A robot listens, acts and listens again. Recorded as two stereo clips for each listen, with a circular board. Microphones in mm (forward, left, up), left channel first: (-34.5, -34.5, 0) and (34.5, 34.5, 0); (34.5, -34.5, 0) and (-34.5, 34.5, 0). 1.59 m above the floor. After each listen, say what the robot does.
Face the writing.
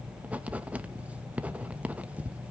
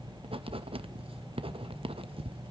Turn 120° left.
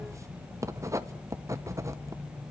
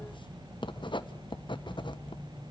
Turn 15° right.
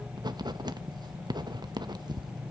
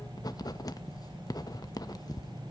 Found it: writing, straight ahead, 1 to 2 m away.